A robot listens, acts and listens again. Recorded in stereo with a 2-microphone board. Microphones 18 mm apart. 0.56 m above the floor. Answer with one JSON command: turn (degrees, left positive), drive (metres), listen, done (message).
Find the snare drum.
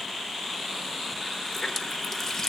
{"listen": true}
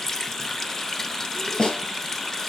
{"turn": 90}
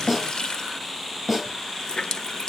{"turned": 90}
{"turn": -15}
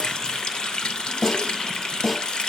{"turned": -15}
{"done": "Facing the snare drum, over 4 m away."}